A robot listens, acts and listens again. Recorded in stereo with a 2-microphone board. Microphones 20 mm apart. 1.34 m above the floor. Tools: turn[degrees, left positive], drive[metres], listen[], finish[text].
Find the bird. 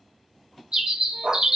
Thought: The bird: about 45° right or 135° right.
Action: turn[-45]
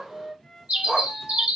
Thought: So it is at 85° right.
Action: turn[-85]
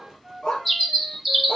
Action: finish[Facing the bird, 1 to 2 m away.]